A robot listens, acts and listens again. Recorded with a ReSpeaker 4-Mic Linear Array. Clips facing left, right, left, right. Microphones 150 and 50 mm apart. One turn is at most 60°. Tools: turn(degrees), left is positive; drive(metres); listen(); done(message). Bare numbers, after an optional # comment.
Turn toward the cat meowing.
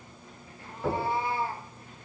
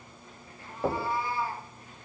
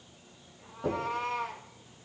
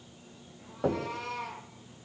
# The cat meowing: about 25° left or 155° left.
turn(25)
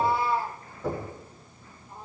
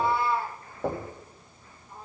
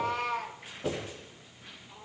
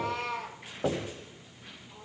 done("Found it: a cat meowing, straight ahead.")